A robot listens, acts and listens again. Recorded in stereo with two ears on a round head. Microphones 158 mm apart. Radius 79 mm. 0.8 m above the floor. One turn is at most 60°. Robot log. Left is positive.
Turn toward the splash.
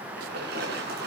note: The splash: about 70° right or 110° right.
cmd yaw -60
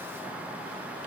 cmd idle
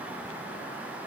end: I heard a splash, but can't make it out now. It was about 10° right or 50° right.